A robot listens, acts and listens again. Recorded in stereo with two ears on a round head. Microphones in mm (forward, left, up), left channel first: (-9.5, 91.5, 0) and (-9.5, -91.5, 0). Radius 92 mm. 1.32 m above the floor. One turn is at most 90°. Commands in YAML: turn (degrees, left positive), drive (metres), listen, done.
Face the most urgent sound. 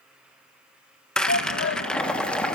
turn: 65
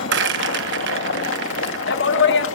turn: 55
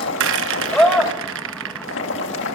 done: "Facing the shout."